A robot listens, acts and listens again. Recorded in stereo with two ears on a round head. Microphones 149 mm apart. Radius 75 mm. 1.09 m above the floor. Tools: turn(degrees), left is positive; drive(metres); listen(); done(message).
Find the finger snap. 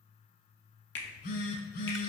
turn(degrees=70)
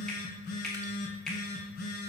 done("Found it: a finger snap, straight ahead.")